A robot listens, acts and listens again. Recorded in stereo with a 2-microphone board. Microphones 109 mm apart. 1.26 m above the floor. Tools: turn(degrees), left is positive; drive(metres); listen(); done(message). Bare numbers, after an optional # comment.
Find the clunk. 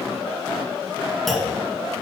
turn(30)
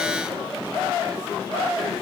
listen()
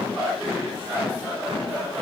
done("I heard a clunk, but can't make it out now. It was about 30° right or 150° left.")